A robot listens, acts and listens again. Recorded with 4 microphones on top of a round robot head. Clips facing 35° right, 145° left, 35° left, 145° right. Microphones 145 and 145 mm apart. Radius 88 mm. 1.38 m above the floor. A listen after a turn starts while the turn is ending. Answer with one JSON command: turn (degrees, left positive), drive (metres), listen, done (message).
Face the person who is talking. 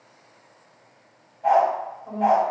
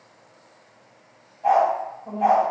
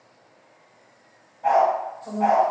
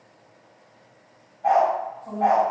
{"turn": 75}
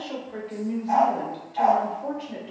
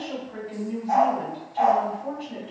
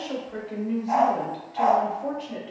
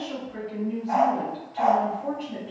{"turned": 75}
{"turn": -25}
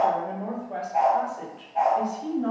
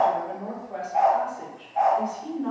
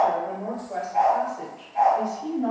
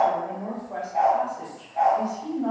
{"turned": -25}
{"turn": -30}
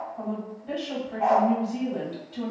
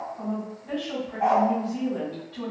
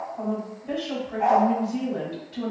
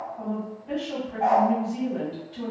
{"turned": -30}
{"turn": 10}
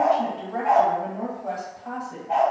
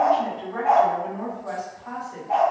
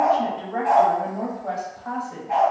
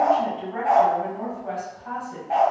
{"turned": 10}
{"done": "Facing the woman speaking, 1 to 2 m away."}